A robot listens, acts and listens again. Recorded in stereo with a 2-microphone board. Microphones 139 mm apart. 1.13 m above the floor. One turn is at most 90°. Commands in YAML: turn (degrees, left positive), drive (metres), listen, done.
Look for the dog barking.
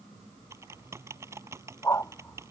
turn: 20
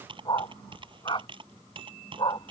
turn: 35
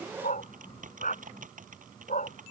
turn: 90
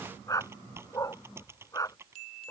turn: 25
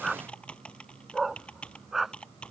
done: "Facing the dog barking."